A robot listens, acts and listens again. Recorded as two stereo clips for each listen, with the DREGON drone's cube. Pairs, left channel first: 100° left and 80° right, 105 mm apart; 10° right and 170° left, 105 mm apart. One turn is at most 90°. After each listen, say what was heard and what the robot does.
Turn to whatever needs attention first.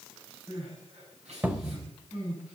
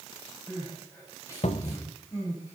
The crying: 75° right. Turn 75° right.
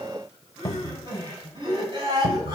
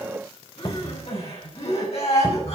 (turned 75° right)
The crying is now 35° right. Turn 35° right.
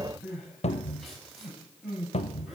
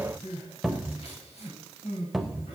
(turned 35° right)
The crying is now 10° left. Turn 10° left.
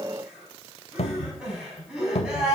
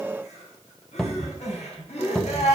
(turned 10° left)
Found it: crying, straight ahead, over 4 m away.